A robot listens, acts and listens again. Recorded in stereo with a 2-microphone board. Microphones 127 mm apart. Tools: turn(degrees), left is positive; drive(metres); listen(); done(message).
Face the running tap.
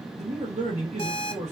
listen()
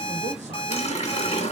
turn(degrees=60)
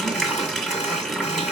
done("Facing the running tap.")